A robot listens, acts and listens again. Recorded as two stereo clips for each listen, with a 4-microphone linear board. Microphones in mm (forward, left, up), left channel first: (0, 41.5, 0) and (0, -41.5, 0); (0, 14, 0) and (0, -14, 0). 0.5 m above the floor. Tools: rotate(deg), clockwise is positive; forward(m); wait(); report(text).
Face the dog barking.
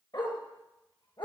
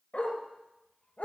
rotate(-75)
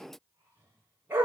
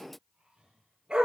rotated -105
rotate(20)
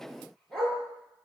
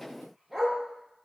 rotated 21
report("Facing the dog barking.")